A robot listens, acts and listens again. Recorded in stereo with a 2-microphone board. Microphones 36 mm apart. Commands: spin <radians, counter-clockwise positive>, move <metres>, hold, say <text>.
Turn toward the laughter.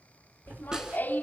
spin 1.13
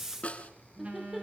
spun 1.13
say Facing the laughter, 2 to 4 m away.